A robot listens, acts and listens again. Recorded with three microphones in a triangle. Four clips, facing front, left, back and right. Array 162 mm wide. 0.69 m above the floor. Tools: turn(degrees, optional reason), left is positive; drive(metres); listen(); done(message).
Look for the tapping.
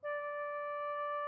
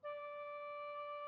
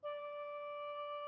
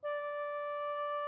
listen()
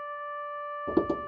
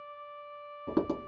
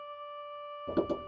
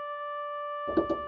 turn(degrees=35, reason="The tapping: 35° left.")
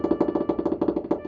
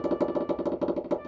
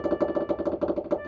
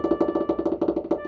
turn(degrees=-10, reason="The tapping is now 10° right.")
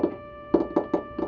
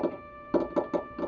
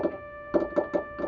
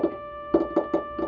done("Facing the tapping.")